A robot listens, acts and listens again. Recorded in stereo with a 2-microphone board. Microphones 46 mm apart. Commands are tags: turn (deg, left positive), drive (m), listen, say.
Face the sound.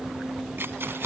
<turn deg="-55"/>
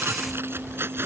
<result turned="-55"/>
<turn deg="-60"/>
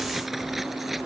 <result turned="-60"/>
<listen/>
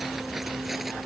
<listen/>
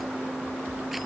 <say>I heard keys jangling from this way, but can't make it out now.</say>